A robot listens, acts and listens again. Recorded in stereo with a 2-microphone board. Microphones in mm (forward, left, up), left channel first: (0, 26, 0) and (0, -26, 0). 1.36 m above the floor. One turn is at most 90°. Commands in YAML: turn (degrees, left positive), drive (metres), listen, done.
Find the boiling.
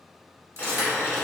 turn: 45
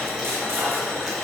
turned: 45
done: "Found it: boiling, straight ahead."